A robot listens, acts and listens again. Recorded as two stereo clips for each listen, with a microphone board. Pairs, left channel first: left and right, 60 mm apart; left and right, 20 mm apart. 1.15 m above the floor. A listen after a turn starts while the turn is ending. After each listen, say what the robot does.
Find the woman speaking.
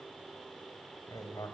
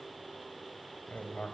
Keep listening.
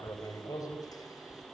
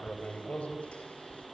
Keep listening.
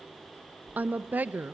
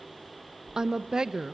Turn 30° right.
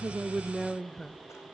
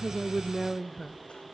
Facing the woman speaking, under 1 m away.